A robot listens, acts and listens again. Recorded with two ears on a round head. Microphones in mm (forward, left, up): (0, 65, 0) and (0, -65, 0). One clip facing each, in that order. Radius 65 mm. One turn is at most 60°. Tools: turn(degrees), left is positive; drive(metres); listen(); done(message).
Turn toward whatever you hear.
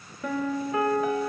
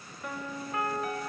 turn(degrees=60)
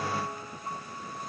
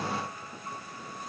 turn(degrees=20)
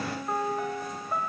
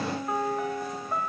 done("Facing the piano.")